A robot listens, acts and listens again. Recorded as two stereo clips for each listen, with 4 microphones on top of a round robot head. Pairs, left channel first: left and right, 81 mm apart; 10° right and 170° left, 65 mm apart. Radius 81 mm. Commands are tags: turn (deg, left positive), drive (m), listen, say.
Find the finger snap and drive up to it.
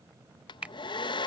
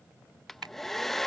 <turn deg="-165"/>
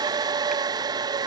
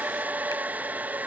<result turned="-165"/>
<listen/>
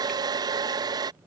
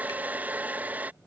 <listen/>
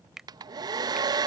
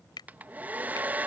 <drive m="1.0"/>
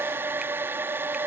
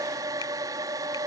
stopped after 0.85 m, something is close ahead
<listen/>
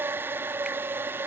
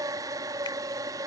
<listen/>
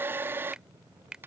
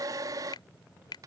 <turn deg="-10"/>
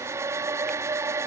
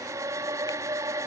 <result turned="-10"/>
<listen/>
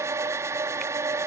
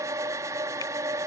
<listen/>
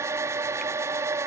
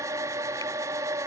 <say>Facing where the finger snap came from. I can't hear it now. I did not reach it.</say>